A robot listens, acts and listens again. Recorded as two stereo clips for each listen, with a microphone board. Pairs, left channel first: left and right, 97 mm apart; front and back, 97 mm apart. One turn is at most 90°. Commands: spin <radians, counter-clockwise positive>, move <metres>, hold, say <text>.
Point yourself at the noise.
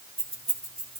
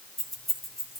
spin -1.57
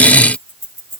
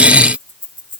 spin -0.61
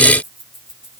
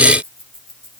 say Facing the keys jangling.